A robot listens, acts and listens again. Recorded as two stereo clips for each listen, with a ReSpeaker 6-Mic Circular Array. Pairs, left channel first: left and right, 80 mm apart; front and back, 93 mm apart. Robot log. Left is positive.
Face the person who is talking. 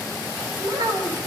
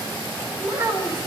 note: The child speaking: 120° right.
cmd yaw -120
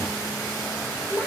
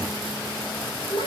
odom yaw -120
note: The child speaking is now 10° right.
cmd yaw -10
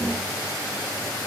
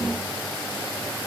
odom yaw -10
cmd idle
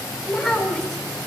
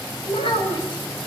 end: Facing the child speaking, 2 to 4 m away.